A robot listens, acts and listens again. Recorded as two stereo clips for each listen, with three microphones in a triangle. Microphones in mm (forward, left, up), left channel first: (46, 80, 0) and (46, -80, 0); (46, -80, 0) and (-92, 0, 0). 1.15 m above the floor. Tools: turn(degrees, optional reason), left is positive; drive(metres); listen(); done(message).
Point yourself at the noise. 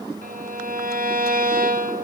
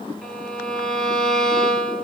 turn(degrees=-115, reason="The violin: 115° right.")
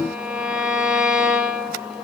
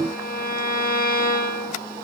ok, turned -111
done("Found it: a violin, straight ahead, 1 to 2 m away.")